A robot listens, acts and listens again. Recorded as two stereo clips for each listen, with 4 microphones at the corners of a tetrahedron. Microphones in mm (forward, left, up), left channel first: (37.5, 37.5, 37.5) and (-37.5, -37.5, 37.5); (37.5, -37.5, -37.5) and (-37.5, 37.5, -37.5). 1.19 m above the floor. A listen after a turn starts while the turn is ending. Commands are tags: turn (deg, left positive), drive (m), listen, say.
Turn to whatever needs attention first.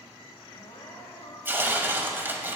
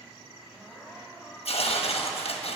<turn deg="40"/>
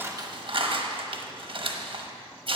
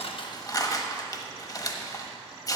<listen/>
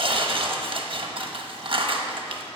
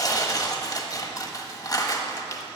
<listen/>
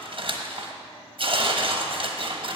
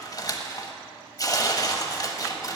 <say>I heard crying from this way, but can't make it out now.</say>